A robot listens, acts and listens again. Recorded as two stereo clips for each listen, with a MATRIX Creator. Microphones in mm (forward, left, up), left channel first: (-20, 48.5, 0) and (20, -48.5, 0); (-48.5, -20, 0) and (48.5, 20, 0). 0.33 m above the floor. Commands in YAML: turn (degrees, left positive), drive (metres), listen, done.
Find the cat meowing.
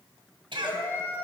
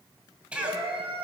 turn: 45
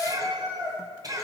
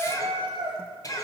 turn: -15
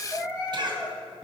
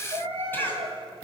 done: "Found it: a cat meowing, straight ahead."